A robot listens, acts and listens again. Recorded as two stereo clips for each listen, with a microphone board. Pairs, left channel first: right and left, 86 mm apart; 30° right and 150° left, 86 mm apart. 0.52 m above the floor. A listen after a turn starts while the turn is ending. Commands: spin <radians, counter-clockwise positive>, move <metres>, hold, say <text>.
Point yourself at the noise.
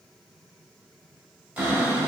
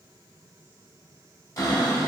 spin 0.35
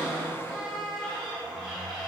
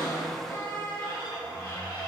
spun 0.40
say Found it: a cupboard door, straight ahead, 1 to 2 m away.